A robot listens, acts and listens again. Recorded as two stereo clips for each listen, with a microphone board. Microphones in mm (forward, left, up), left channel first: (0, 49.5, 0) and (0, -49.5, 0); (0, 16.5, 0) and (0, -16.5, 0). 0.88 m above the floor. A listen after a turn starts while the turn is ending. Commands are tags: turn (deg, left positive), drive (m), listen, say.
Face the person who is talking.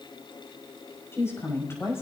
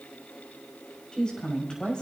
<turn deg="30"/>
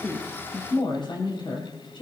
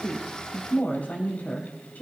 <turn deg="125"/>
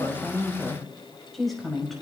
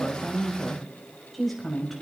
<say>Found it: a woman speaking, straight ahead.</say>